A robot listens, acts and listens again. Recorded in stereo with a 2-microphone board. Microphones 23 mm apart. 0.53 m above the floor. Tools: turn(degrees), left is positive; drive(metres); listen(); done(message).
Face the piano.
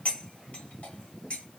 listen()
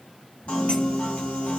turn(degrees=90)
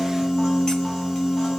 done("Found it: a piano, straight ahead, 2 to 4 m away.")